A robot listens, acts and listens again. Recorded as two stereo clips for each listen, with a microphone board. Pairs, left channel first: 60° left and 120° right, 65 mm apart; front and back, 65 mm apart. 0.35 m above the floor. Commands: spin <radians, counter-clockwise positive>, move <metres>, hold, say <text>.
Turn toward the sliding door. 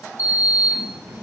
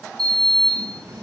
spin -3.05
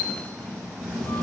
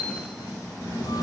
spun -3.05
spin -0.35
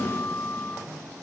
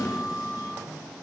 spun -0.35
say Facing the sliding door, 1 to 2 m away.